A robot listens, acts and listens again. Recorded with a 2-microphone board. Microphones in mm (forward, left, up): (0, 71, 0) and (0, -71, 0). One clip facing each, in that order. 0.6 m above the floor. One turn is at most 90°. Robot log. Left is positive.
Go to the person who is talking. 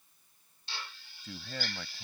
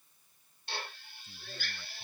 cmd yaw +90
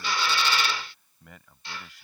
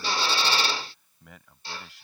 cmd fwd 1.0
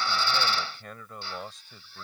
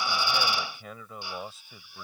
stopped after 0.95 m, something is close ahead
end: Something is in my way. I am facing the man speaking but have not reached it.